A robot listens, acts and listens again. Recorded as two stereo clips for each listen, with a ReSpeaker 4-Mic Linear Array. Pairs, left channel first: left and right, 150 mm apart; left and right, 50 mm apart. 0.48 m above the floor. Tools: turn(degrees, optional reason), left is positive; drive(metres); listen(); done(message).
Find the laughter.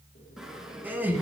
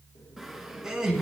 turn(degrees=-30)
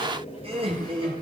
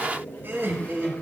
turn(degrees=-140, reason="So it is at 140° right.")
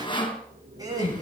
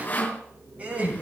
turn(degrees=-25, reason="The laughter is now 25° right.")
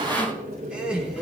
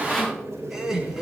done("Found it: laughter, straight ahead.")